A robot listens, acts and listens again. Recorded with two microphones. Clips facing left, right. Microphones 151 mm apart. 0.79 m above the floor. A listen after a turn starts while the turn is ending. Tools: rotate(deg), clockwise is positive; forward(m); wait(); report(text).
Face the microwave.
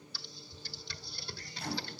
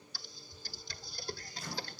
rotate(-60)
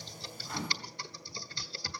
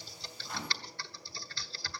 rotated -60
report("Found it: a microwave, straight ahead, over 4 m away.")